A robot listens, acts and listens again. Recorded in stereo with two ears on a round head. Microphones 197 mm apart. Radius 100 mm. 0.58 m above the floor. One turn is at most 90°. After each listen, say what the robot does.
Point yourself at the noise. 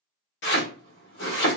Turn 55° left.
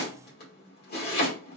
Turn 50° left.
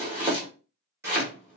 Turn 15° right.
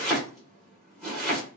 Facing the chopping, 1 to 2 m away.